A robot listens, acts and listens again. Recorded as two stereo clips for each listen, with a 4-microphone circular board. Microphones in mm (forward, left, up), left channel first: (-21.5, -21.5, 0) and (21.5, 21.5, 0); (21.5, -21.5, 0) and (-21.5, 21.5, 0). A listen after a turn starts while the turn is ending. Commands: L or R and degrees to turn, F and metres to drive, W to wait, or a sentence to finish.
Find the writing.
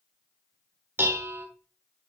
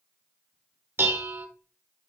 W
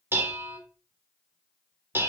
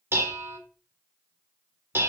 W
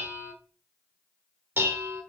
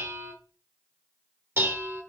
I can't make out writing to turn to.